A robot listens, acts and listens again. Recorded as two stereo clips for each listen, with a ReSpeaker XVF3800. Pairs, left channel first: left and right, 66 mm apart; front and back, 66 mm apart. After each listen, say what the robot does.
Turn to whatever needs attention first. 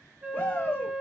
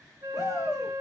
Turn 30° left.
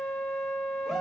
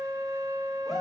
Keep listening.
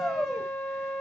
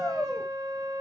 Found it: a shout, straight ahead.